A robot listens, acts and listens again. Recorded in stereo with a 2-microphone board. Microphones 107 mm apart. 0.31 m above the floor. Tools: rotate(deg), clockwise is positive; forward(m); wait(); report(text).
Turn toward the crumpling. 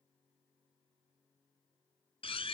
wait()
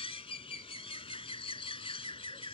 wait()
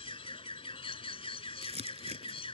rotate(90)
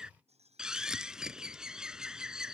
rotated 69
report("Facing the crumpling.")